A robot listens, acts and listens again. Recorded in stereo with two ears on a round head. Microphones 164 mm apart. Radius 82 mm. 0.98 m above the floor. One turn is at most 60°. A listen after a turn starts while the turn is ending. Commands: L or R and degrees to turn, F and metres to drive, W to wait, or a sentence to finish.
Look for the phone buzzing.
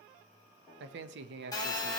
L20
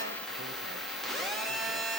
Found it: a phone buzzing, straight ahead.